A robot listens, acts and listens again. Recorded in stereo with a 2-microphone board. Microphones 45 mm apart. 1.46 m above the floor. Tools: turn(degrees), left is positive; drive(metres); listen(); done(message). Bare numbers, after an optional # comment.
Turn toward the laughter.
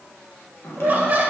# The laughter: about 35° right or 145° right.
turn(-35)
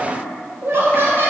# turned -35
# So it is at 130° right.
turn(-130)
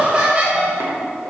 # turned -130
# The laughter is now 30° right.
turn(-30)
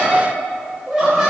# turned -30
# The laughter is now 10° right.
turn(-10)
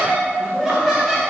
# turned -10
done("Facing the laughter.")